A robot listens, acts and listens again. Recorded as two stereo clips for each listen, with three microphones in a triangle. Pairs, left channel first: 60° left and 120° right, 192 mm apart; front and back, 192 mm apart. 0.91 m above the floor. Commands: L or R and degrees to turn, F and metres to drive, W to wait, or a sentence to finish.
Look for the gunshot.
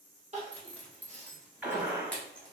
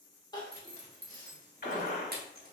R40
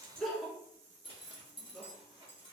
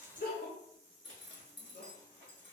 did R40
Facing where the gunshot came from. I can't hear it now.